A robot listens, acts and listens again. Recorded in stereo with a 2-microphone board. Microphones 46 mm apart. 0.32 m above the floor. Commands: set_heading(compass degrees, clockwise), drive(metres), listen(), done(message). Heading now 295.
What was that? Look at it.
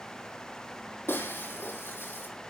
set_heading(240)
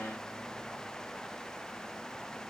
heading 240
listen()
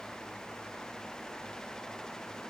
done("I heard breaking glass, but can't make it out now. It was about straight ahead or 70° left.")